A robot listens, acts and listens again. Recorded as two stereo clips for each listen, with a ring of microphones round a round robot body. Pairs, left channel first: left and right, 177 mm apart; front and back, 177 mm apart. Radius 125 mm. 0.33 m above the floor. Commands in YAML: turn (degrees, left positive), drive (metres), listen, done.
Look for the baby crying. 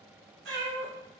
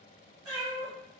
listen: true
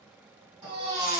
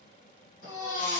turn: -40
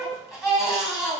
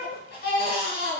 done: "Facing the baby crying, 1 to 2 m away."